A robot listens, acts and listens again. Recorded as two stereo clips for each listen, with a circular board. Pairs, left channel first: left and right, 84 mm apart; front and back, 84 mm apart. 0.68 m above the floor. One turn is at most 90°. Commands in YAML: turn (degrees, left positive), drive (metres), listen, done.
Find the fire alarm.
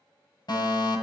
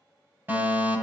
turn: 90
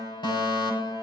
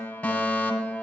turn: 75
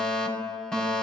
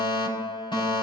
turn: 10
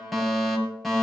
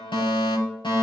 done: "Found it: a fire alarm, straight ahead, over 4 m away."